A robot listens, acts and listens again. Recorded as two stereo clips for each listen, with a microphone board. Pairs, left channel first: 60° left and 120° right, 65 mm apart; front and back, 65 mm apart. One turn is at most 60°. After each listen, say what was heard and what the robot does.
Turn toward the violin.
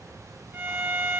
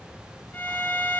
The violin: 65° right. Turn 60° right.
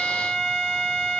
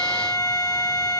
The violin is now 15° right. Turn 15° right.
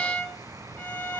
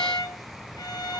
Found it: a violin, straight ahead, 2 to 4 m away.